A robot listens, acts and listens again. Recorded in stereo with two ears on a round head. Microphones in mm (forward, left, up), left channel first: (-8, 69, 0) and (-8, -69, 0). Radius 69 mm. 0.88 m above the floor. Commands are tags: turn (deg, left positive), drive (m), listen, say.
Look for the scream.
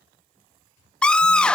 <turn deg="30"/>
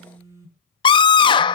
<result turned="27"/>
<turn deg="145"/>
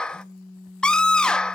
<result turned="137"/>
<say>Found it: a scream, straight ahead, under 1 m away.</say>